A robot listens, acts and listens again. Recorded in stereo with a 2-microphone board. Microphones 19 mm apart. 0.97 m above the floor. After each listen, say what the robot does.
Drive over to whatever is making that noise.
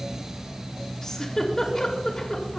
Turn 30° left.
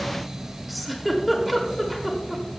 Drive 1.0 m forward.
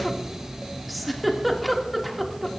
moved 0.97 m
Drive 1.0 m forward.
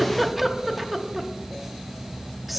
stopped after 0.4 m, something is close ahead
Turn 10° right.
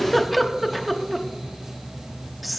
Arrived at the giggle, straight ahead.